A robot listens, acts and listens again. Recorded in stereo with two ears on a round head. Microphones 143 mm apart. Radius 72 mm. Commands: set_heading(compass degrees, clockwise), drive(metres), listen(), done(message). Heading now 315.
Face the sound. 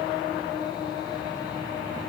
listen()
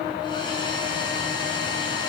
set_heading(285)
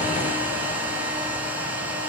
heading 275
set_heading(285)
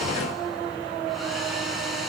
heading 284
listen()
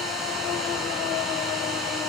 done("Facing the hair dryer.")